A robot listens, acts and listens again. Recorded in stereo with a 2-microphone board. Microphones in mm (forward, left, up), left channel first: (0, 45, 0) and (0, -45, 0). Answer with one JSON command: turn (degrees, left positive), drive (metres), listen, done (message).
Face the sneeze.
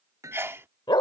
{"turn": -25}
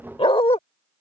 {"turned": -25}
{"listen": true}
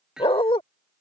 {"done": "I heard a sneeze, but can't make it out now. It was about straight ahead or 130° right."}